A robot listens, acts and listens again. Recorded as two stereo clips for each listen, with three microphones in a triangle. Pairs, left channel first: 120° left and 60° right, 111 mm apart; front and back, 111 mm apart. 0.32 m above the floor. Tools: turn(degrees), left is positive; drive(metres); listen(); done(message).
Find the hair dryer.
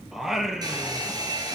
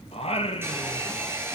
turn(degrees=-110)
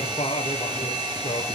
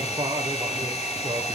turn(degrees=-10)
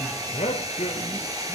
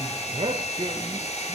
done("Facing the hair dryer.")